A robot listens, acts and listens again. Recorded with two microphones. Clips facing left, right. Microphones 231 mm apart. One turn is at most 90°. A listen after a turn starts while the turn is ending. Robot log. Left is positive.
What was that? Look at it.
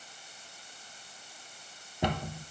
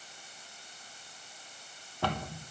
note: The cupboard door: about 20° left or 160° left.
cmd yaw +20
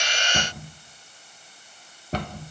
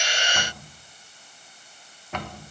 note: So it is at 140° left.
cmd yaw +90
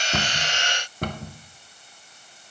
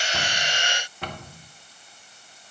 note: The cupboard door is now 50° left.
cmd yaw +50
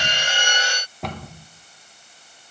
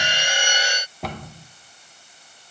end: Found it: a cupboard door, straight ahead, under 1 m away.